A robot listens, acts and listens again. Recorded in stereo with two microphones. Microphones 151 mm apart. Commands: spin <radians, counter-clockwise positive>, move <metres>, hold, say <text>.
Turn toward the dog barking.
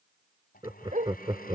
spin -0.96
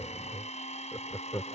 hold
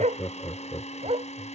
spin -0.70
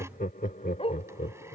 spin 0.70
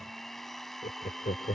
hold
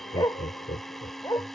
spin 0.44
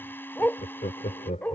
spin 0.17
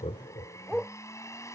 say Found it: a dog barking, straight ahead.